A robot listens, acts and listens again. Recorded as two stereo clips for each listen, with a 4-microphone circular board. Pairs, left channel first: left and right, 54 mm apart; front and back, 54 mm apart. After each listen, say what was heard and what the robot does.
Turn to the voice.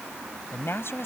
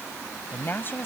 The woman speaking: 50° left. Turn 50° left.
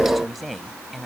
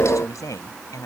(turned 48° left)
Facing the woman speaking.